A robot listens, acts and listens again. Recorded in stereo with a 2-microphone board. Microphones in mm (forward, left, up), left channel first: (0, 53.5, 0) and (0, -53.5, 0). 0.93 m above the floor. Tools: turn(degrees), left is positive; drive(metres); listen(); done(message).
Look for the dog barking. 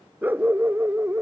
turn(degrees=-20)
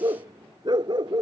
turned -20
turn(degrees=-135)
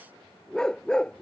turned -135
turn(degrees=10)
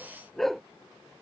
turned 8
done("Facing the dog barking.")